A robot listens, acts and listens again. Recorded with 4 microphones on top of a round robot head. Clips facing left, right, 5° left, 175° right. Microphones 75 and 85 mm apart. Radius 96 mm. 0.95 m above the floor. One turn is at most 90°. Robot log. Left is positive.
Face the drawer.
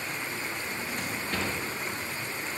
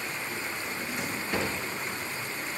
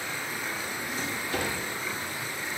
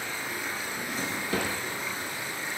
note: The drawer: 170° right.
cmd yaw -90
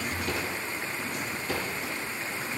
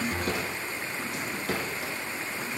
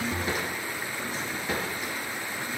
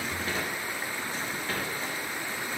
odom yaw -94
note: The drawer is now 75° right.
cmd yaw -75
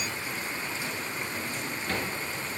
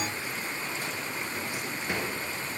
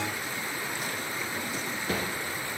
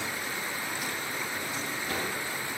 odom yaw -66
note: The drawer is now 10° right.
cmd yaw -10
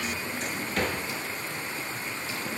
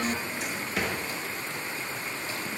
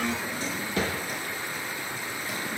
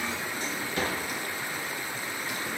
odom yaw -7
end: Found it: a drawer, straight ahead.